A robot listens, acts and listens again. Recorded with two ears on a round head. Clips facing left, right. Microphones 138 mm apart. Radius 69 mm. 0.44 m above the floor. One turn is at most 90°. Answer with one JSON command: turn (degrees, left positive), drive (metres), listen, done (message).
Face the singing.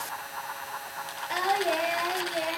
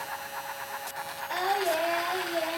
{"turn": 15}
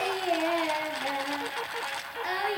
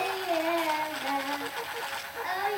{"turn": 40}
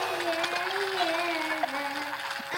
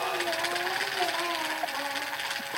{"turn": 90}
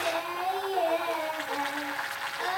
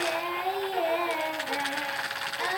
{"turn": -15}
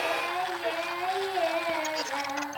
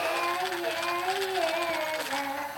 {"done": "Found it: singing, straight ahead."}